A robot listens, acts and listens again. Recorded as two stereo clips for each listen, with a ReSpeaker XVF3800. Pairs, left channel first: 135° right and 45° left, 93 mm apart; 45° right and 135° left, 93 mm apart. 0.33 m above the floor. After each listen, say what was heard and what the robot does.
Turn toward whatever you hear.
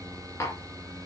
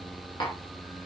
The tapping: 75° right. Turn 75° right.
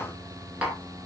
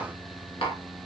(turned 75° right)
The tapping is now 35° right. Turn 35° right.
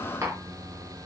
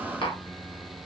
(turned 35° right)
The tapping is now 15° right. Turn 15° right.
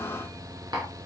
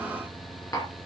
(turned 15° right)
Found it: tapping, straight ahead.